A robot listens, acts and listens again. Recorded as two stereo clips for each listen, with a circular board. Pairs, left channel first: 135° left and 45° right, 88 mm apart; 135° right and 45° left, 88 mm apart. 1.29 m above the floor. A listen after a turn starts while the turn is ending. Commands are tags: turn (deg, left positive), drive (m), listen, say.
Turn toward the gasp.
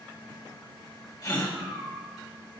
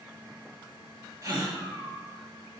<turn deg="95"/>
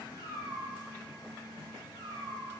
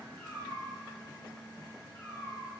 <say>I heard a gasp from this way, but can't make it out now.</say>